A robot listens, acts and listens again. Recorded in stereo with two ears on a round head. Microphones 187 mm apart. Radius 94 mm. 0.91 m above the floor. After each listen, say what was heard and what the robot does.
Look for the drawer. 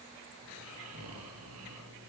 Keep listening.
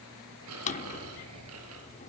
The drawer: about 35° left or 145° left. Turn 35° left.
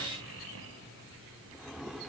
Found it: a drawer, straight ahead, 1 to 2 m away.